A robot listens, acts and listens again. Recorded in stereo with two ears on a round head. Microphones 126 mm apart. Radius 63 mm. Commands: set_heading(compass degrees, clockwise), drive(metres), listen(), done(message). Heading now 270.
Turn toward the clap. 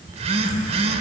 listen()
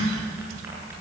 listen()
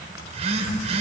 done("I can't make out a clap, only a phone buzzing.")